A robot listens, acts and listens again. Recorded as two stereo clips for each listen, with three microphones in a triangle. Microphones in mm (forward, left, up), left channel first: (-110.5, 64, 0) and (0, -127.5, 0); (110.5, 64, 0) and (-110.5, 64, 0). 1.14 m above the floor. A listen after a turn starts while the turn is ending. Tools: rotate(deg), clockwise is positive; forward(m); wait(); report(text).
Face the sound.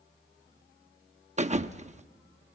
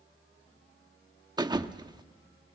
rotate(115)
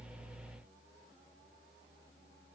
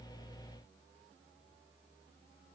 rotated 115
report("Facing where the thud came from. I can't hear it now.")